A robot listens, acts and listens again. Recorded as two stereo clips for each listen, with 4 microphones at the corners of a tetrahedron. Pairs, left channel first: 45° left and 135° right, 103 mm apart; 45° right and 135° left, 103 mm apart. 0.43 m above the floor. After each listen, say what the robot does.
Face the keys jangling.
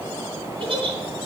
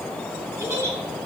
Keep listening.
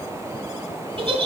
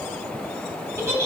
Keep listening.
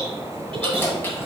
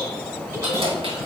Turn 115° left.
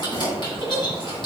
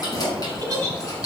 Found it: keys jangling, straight ahead, 2 to 4 m away.